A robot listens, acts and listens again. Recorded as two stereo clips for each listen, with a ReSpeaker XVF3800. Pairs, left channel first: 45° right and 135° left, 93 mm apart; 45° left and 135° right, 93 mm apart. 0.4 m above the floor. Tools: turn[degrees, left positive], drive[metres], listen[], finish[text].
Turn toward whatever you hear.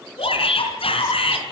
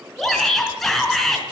Thought: The shout: 45° right.
Action: turn[-45]
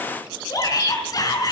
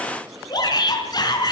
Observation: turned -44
Action: finish[Facing the shout, over 4 m away.]